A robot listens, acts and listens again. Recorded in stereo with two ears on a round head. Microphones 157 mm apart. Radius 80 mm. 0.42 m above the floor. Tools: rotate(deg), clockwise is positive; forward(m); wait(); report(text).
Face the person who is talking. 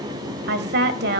rotate(60)
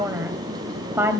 rotate(15)
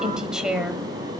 report("Facing the woman speaking, 1 to 2 m away.")